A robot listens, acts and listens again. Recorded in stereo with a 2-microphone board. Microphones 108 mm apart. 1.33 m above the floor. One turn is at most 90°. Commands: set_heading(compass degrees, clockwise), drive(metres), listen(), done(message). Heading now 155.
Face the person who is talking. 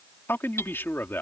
set_heading(135)
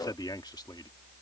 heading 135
set_heading(45)
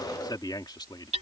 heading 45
set_heading(5)
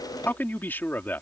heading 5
set_heading(345)
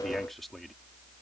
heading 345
done("Facing the man speaking.")